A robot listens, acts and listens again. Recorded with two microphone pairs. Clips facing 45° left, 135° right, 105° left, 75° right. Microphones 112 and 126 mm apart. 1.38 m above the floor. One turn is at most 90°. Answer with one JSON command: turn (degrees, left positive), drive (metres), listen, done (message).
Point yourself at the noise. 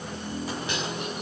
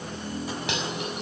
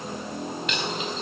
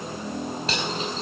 {"turn": -90}
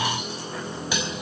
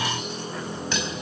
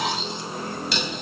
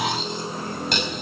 {"turn": -35}
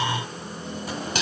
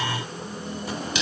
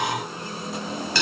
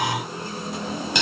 {"done": "Facing the cutlery clinking, over 4 m away."}